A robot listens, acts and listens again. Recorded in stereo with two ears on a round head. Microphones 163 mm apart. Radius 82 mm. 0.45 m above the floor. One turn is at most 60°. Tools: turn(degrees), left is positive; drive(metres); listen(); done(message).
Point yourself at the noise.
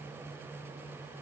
listen()
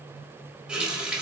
turn(degrees=-30)
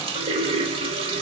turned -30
turn(degrees=-60)
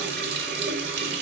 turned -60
turn(degrees=-60)
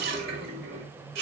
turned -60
turn(degrees=-60)
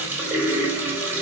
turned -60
turn(degrees=-15)
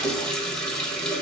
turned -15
done("Facing the running tap.")